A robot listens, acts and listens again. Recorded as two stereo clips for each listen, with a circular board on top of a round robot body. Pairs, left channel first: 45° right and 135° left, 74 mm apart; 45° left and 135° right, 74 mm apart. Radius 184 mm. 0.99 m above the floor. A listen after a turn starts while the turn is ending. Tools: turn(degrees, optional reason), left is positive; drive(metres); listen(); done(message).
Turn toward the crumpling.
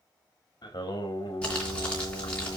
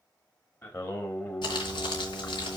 turn(degrees=30, reason="The crumpling: 30° left.")
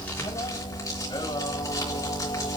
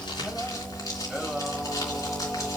done("Found it: crumpling, straight ahead, 2 to 4 m away.")